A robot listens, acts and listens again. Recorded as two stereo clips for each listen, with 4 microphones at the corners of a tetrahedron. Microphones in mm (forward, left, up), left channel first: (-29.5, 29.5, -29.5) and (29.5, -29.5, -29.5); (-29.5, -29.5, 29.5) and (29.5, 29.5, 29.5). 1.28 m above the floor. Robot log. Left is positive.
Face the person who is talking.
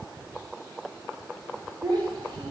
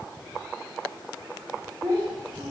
note: The child speaking: 15° right.
cmd yaw -15
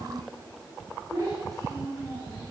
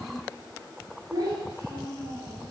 end: Facing the child speaking.